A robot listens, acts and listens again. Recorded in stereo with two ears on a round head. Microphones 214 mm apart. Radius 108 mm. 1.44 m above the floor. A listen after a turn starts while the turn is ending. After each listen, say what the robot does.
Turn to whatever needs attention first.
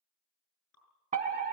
Turn 30° right.
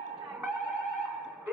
Turn 10° right.
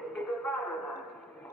Facing the fire alarm, 1 to 2 m away.